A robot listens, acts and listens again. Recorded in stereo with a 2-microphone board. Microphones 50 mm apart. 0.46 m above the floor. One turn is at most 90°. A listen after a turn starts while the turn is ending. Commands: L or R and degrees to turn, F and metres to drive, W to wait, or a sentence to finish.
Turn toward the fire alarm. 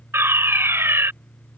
R55
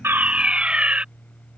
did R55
R30
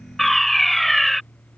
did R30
Facing the fire alarm.